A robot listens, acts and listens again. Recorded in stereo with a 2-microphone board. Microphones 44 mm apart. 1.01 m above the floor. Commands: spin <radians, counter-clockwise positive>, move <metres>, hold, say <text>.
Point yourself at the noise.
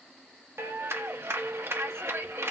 spin -1.57
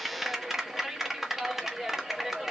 spin -0.17
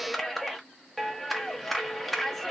say Facing the clap, 1 to 2 m away.